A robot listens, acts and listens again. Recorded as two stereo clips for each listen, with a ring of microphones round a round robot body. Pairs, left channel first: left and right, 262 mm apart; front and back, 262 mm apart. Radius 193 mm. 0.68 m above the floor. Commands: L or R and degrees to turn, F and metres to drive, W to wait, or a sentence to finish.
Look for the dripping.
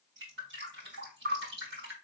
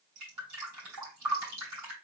R150
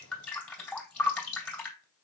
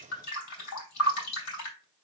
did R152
Found it: dripping, straight ahead, 2 to 4 m away.